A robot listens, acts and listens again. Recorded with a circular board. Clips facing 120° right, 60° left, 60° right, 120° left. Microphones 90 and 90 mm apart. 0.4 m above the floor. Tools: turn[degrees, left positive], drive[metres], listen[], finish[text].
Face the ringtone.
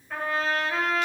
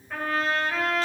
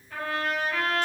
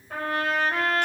Action: listen[]
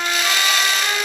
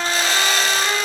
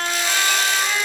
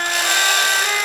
Action: listen[]
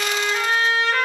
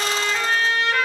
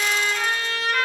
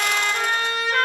Action: finish[I can't make out a ringtone to turn to.]